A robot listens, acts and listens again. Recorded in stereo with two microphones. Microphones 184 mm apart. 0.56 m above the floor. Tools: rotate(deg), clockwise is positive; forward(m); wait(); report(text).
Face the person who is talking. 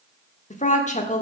rotate(-40)
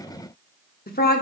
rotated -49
rotate(-80)
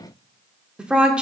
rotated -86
report("Facing the woman speaking, 1 to 2 m away.")